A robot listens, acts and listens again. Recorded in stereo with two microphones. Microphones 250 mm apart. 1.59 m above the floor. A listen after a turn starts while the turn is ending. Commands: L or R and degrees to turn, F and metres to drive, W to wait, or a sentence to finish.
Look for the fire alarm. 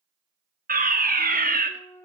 R35
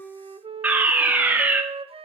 Facing the fire alarm.